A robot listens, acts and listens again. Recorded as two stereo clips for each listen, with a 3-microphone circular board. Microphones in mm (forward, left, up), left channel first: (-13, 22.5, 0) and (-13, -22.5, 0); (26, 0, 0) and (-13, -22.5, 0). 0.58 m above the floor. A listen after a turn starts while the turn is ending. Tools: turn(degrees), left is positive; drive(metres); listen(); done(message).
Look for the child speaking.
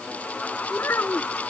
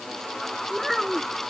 turn(degrees=115)
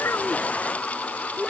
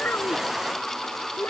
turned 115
done("Facing the child speaking.")